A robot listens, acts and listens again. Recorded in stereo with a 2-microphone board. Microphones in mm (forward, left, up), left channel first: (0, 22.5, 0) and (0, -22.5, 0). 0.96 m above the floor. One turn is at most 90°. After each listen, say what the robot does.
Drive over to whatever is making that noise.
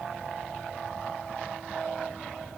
Keep listening.
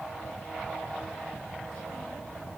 Keep listening.
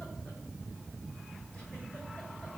I can't make out anything.